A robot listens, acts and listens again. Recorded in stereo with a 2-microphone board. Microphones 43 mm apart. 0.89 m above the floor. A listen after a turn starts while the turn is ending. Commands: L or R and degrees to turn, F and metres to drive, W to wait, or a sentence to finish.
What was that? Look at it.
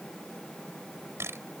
R75
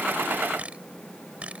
R30
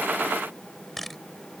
Facing the camera shutter.